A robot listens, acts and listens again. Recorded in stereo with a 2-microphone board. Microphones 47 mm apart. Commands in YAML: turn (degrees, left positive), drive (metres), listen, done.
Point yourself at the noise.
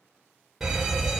turn: -30
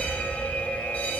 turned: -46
turn: 35
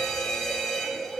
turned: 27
turn: 10
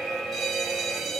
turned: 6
done: "Facing the fire alarm, 2 to 4 m away."